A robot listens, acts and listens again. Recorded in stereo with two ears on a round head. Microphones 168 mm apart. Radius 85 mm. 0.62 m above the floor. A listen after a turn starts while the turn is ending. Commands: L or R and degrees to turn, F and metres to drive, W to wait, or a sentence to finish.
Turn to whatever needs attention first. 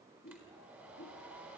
W
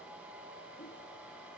W
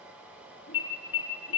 L75
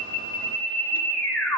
Found it: an alarm, straight ahead, over 4 m away.